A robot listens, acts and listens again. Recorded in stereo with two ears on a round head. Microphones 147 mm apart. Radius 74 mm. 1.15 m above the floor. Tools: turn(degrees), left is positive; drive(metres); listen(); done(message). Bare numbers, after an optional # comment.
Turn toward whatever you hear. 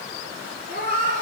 # The cat meowing: about 55° right or 125° right.
turn(-55)
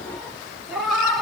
done("Found it: a cat meowing, straight ahead, 2 to 4 m away.")